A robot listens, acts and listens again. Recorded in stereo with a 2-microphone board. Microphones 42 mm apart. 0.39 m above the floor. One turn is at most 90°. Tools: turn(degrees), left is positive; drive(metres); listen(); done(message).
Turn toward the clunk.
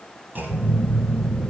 turn(degrees=-45)
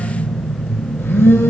listen()
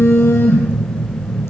done("I heard a clunk, but can't make it out now. It was about straight ahead or 90° right.")